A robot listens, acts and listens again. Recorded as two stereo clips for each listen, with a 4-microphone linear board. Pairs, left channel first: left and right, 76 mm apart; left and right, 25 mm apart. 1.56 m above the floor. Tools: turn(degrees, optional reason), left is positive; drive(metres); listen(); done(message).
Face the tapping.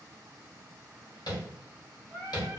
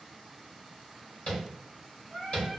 turn(degrees=70, reason="The tapping: about 70° left or 110° left.")
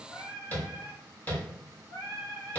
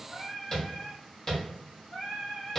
turn(degrees=30, reason="So it is at 30° left.")
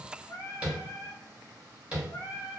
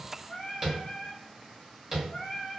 turn(degrees=-20, reason="The tapping is now 20° right.")
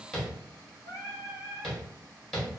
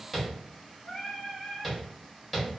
done("Found it: tapping, straight ahead.")